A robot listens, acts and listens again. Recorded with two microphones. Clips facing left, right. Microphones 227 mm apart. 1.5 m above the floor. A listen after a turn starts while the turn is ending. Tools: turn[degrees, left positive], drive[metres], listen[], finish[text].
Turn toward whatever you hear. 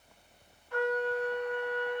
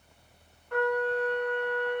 Thought: The trumpet: about 60° right or 120° right.
Action: turn[-60]
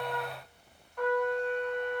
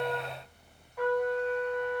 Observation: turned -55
Action: finish[Found it: a trumpet, straight ahead.]